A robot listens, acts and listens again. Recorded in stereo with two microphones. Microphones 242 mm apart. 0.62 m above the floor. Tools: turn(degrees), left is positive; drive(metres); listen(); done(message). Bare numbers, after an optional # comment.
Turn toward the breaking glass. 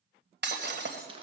# The breaking glass: about 50° right or 130° right.
turn(-50)
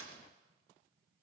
listen()
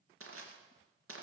done("I heard breaking glass, but can't make it out now. It was about straight ahead or 80° right.")